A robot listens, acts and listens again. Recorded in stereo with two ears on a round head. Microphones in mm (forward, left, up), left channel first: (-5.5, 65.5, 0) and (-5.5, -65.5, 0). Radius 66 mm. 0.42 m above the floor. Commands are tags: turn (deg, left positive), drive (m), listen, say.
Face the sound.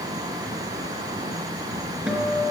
<turn deg="-30"/>
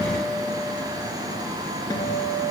<turn deg="25"/>
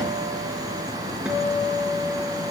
<turn deg="-10"/>
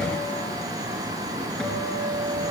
<say>Found it: a guitar, straight ahead.</say>